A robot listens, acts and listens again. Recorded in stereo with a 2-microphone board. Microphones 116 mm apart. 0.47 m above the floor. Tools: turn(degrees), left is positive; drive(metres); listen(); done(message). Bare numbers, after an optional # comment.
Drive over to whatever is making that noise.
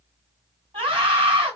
# The scream: about 55° right or 125° right.
turn(-55)
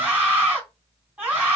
# So it is at 20° right.
turn(-20)
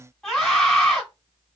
drive(1.0)
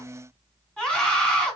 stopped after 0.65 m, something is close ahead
done("Arrived at the scream, straight ahead.")